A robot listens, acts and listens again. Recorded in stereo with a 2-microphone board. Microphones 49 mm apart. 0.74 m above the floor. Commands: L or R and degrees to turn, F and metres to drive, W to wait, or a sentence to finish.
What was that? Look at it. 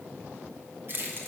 R45
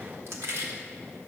R85
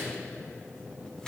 L20
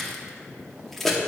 Facing the keys jangling.